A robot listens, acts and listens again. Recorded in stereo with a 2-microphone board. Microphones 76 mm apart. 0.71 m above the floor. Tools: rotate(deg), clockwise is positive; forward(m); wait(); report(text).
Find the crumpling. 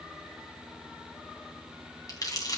rotate(-60)
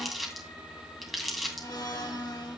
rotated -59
report("Found it: crumpling, straight ahead, 2 to 4 m away.")